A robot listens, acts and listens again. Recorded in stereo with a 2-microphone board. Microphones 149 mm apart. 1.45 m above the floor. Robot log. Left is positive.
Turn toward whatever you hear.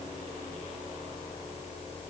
cmd idle
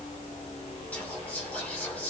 cmd yaw +30
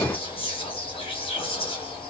note: So it is at 140° left.
cmd yaw +140
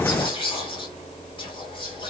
note: The whispering is now 35° left.
cmd yaw +35
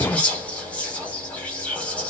note: The whispering is now 10° left.
cmd yaw +10
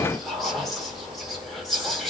end: Found it: whispering, straight ahead.